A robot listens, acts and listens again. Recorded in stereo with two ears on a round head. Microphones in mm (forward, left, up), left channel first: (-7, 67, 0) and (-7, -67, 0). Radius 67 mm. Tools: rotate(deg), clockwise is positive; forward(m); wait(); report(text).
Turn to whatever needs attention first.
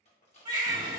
rotate(30)
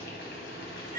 rotate(115)
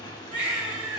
rotate(35)
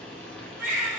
rotate(15)
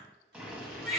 report("Facing the baby crying, 1 to 2 m away.")